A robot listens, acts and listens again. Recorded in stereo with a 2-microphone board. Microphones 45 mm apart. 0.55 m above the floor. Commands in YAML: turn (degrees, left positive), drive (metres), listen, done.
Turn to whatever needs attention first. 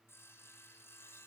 listen: true
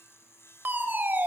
turn: -45
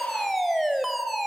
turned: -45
done: "Facing the fire alarm, 2 to 4 m away."